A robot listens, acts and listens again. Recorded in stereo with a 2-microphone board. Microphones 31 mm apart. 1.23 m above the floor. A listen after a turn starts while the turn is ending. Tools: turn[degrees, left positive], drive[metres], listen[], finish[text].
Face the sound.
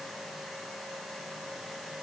Action: listen[]
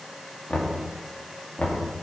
Thought: The knocking: about 50° left or 130° left.
Action: turn[50]
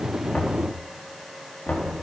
Thought: So it is at 80° left.
Action: turn[80]
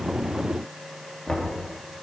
Thought: The knocking is now 15° left.
Action: turn[15]
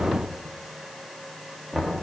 Action: finish[Facing the knocking, 2 to 4 m away.]